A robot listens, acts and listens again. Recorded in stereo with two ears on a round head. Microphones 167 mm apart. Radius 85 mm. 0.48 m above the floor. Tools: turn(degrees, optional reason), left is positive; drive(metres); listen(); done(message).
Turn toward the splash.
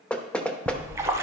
turn(degrees=-15, reason="The splash: about 15° right or 165° right.")
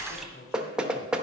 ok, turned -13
done("Found it: a splash, straight ahead, under 1 m away.")